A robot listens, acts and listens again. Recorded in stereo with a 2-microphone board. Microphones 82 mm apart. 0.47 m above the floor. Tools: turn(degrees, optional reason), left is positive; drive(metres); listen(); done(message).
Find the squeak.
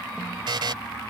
listen()
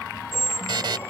turn(degrees=30, reason="The squeak: about 30° left or 150° left.")
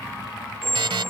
done("Found it: a squeak, straight ahead.")